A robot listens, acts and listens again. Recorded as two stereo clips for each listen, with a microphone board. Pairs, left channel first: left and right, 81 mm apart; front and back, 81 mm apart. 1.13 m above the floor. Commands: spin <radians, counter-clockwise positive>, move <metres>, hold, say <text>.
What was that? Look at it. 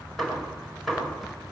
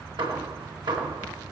spin 3.05
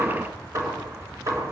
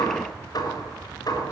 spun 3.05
spin -0.70
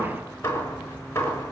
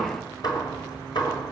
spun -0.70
spin 0.52
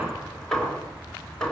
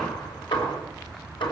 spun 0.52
say Found it: hammering, straight ahead.